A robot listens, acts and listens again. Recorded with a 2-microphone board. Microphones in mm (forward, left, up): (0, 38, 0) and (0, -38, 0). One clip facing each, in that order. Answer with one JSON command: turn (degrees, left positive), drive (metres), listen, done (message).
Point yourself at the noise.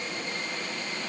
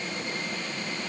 {"listen": true}
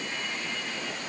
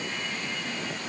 {"listen": true}
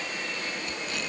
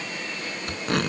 {"turn": -55}
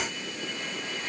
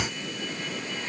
{"listen": true}
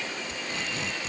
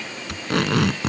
{"turn": -70}
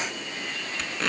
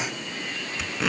{"done": "Found it: tape being pulled, straight ahead."}